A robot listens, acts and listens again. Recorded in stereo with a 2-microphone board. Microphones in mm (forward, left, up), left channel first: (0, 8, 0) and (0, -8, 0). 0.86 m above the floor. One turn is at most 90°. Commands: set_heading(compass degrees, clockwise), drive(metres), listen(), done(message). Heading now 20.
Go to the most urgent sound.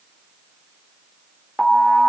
set_heading(350)
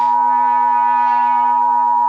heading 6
set_heading(351)
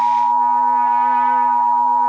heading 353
drive(1.0)
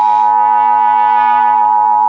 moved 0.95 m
set_heading(343)
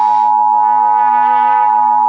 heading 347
drive(1.0)
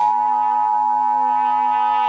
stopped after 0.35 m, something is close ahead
done("Arrived at the alarm, straight ahead.")